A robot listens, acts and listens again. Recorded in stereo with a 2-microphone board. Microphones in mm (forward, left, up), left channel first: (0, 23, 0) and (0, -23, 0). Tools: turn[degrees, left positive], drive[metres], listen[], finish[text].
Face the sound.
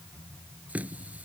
Thought: The running tap: about 35° right or 145° right.
Action: turn[-35]
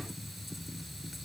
Action: finish[Facing the running tap.]